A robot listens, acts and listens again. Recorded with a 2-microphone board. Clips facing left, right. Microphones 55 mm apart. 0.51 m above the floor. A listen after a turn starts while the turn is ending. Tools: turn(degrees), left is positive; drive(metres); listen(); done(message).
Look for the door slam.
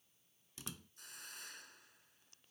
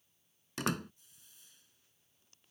turn(degrees=-70)
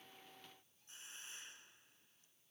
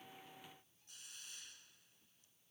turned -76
listen()
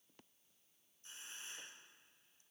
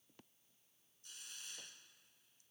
done("I heard a door slam, but can't make it out now. It was about 5° left or 30° right.")